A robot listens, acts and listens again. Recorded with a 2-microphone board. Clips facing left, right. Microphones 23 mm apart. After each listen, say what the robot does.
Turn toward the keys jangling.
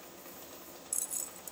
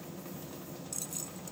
Turn 20° right.
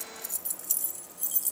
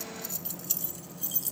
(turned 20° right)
Turn 20° right.
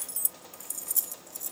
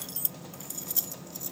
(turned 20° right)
Turn 30° right.
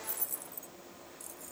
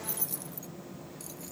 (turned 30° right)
Turn 125° right.
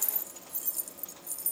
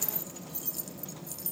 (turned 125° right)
Turn 20° right.
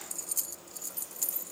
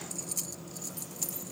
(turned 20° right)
Turn 10° right.
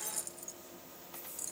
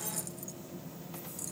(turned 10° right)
Facing the keys jangling.